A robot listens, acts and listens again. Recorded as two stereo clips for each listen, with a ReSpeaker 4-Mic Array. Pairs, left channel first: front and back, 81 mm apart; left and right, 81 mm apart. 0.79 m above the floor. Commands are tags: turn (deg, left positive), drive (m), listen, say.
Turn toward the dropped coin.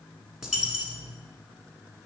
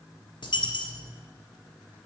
<turn deg="95"/>
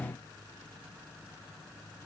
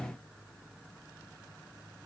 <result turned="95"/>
<say>I heard a dropped coin from this way, but can't make it out now.</say>